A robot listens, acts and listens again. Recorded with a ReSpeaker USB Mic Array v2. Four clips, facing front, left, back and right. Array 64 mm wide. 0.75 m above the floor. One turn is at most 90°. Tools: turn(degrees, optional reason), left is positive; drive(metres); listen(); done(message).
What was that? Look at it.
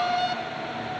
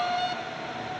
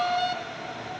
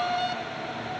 listen()
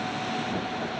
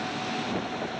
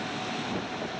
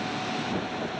listen()
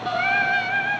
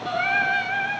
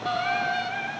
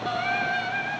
turn(degrees=20, reason="The singing: 20° left.")
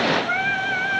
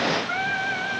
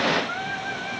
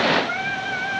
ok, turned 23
turn(degrees=-15, reason="The singing is now 15° right.")
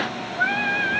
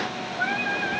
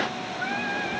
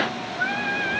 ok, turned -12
turn(degrees=-10, reason="The singing is now 10° right.")
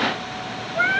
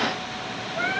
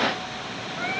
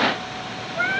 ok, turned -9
turn(degrees=-10, reason="The singing is now 10° right.")
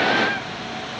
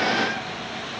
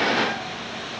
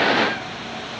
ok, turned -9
listen()
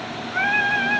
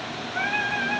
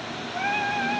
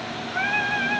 turn(degrees=-10, reason="The singing is now 10° right.")
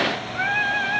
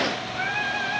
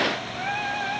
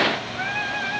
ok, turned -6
done("Found it: singing, straight ahead.")